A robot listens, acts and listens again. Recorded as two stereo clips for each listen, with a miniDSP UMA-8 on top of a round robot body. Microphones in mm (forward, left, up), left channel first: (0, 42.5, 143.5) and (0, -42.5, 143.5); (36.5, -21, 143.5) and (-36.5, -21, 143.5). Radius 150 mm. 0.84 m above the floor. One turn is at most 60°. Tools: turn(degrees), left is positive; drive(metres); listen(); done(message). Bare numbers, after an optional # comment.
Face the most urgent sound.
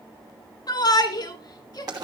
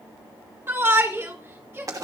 # The shout: 120° left.
turn(60)
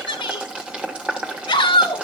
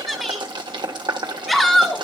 # The shout is now 85° left.
turn(60)
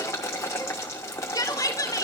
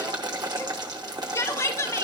# The shout is now 45° left.
turn(45)
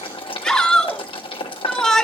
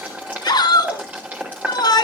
done("Facing the shout, 2 to 4 m away.")